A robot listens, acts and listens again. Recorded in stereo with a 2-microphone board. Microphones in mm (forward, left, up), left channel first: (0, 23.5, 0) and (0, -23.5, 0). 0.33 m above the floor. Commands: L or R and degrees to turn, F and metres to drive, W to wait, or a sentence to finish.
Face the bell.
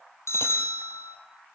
L90
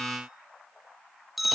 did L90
Found it: a bell, straight ahead, 2 to 4 m away.